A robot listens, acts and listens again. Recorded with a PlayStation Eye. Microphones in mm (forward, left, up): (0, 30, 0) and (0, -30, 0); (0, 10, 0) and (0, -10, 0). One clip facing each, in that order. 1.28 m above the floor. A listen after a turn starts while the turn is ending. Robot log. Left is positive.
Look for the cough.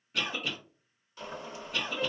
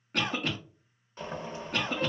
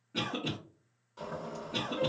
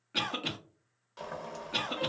note: The cough: about 55° right or 125° right.
cmd yaw -55
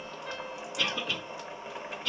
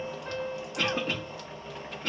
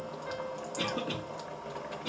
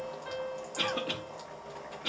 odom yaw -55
note: So it is at 55° right.
cmd yaw -55
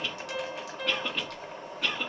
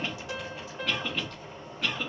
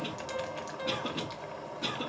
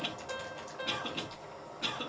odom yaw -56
cmd idle
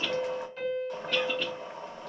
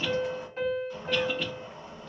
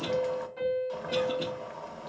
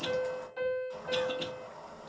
cmd idle
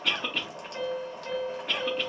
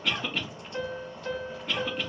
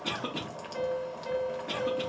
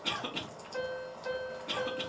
end: Found it: a cough, straight ahead, under 1 m away.